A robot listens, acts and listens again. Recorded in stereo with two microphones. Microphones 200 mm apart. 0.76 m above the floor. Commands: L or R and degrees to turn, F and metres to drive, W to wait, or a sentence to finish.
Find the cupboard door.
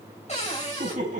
L35
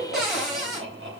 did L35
Found it: a cupboard door, straight ahead, 2 to 4 m away.